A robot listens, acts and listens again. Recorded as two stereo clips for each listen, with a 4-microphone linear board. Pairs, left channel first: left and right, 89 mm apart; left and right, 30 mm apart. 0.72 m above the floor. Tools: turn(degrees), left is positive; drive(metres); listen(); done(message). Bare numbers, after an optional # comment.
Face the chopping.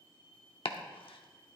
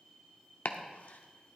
turn(90)
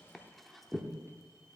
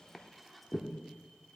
done("Facing the chopping, under 1 m away.")